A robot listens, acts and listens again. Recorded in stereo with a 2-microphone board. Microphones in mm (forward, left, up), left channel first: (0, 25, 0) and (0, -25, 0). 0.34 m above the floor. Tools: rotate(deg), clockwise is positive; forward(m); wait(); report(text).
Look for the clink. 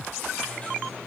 wait()
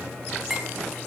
rotate(30)
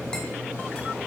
wait()
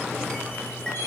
wait()
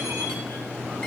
report("I heard a clink, but can't make it out now. It was about 20° left or 140° right.")